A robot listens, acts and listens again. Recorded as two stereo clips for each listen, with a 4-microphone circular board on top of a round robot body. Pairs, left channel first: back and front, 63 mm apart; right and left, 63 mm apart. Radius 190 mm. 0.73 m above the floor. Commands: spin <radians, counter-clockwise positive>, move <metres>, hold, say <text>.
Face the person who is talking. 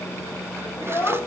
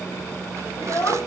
spin -2.53
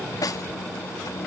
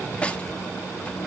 hold
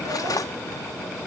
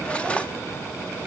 hold
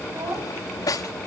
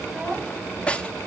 spin 0.17
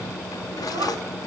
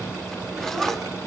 hold
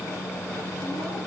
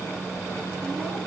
hold
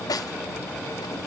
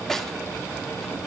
say I heard a child speaking from this way, but can't make it out now.